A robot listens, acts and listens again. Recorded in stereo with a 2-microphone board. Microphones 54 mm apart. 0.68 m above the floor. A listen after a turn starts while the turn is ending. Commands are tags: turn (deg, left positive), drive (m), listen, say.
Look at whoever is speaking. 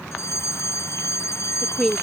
<turn deg="30"/>
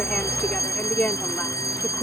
<turn deg="140"/>
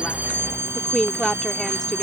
<say>Found it: a woman speaking, straight ahead.</say>